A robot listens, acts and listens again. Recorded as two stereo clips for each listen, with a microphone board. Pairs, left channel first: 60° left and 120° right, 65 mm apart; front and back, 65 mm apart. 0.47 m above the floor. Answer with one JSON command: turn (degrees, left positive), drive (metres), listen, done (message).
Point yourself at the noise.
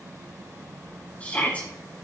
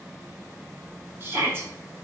{"turn": 125}
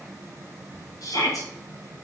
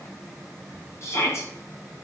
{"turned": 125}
{"turn": 45}
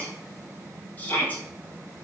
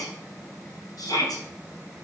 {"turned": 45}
{"done": "Found it: a shout, straight ahead."}